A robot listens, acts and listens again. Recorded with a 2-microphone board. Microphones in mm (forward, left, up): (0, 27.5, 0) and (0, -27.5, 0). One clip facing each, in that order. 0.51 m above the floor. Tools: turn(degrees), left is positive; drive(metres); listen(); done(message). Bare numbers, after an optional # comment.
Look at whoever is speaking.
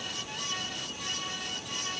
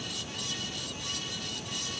listen()
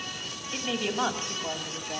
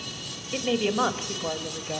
# The woman speaking: about 20° right or 160° right.
turn(-20)
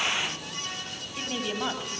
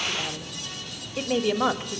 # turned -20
# So it is at 135° right.
turn(-135)
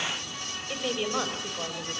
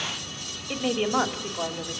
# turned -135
# The woman speaking is now 20° right.
turn(-20)
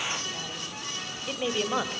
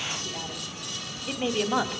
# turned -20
done("Found it: a woman speaking, straight ahead.")